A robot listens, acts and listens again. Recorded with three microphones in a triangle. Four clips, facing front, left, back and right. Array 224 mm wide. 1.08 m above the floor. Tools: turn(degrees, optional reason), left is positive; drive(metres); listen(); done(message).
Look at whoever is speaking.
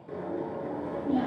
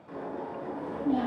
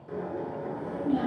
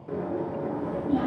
turn(degrees=105, reason="The child speaking: 105° left.")
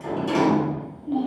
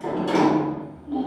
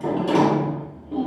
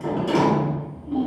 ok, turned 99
done("Facing the child speaking.")